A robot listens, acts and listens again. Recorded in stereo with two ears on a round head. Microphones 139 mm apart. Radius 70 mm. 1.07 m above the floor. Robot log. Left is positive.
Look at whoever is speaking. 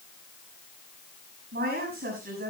note: The woman speaking: about 65° right or 115° right.
cmd yaw -65
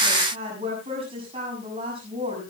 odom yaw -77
note: So it is at 35° right.
cmd yaw -35
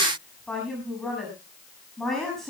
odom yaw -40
end: Found it: a woman speaking, straight ahead.